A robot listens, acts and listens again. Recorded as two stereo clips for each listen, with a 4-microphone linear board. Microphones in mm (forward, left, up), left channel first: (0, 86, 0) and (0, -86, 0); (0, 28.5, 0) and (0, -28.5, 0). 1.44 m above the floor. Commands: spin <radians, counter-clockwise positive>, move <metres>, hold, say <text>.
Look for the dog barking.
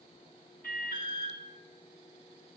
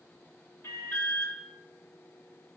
hold
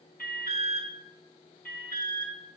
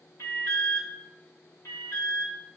hold
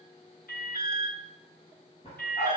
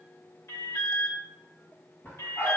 spin 0.70
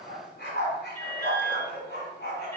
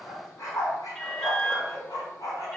spin 1.83
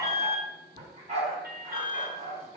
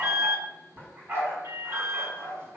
spin -0.70
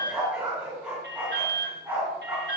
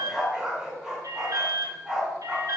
say Found it: a dog barking, straight ahead, over 4 m away.